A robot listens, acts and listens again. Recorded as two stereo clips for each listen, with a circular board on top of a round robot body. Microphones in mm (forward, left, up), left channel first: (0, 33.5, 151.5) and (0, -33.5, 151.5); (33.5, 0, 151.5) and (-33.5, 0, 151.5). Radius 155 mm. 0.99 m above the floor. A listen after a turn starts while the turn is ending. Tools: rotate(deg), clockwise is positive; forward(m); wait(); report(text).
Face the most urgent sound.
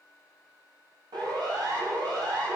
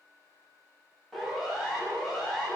rotate(85)
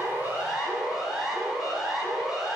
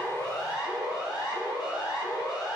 report("Facing the siren.")